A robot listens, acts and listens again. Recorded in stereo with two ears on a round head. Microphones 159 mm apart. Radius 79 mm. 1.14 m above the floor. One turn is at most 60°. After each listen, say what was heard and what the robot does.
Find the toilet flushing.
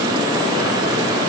Keep listening.
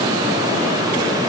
Keep listening.
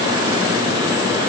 I can't make out a toilet flushing.